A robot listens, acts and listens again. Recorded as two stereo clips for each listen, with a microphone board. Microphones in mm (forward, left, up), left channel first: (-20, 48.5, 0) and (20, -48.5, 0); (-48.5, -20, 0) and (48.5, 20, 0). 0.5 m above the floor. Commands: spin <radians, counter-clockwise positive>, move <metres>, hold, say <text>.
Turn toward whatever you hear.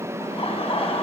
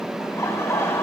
spin 2.44
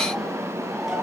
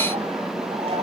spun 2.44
spin 0.35
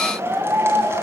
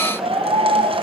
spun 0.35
say Facing the laughter, over 4 m away.